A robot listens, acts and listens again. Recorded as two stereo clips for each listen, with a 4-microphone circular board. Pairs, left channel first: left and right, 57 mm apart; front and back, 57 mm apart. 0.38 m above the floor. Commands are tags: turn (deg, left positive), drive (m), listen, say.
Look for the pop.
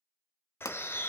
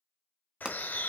<turn deg="105"/>
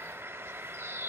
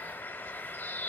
<say>I heard a pop from this way, but can't make it out now.</say>